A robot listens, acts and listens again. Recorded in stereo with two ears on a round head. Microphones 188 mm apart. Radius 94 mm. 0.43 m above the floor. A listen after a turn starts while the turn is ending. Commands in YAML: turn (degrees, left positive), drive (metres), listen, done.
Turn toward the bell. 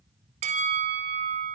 turn: -35
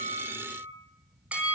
turn: -10
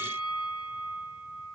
done: "Found it: a bell, straight ahead, 1 to 2 m away."